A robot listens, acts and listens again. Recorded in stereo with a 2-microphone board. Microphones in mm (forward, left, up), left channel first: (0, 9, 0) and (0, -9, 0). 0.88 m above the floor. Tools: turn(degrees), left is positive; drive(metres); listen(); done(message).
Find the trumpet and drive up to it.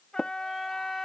turn(degrees=40)
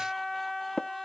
drive(metres=1.0)
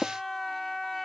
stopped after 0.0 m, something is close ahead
done("Blocked. The trumpet is further on, straight ahead.")